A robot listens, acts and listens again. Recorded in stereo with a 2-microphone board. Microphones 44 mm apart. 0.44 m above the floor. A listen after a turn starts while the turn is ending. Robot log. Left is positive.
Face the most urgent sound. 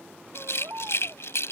note: The baby crying: about 55° right or 125° right.
cmd yaw -55
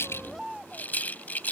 end: Facing the baby crying.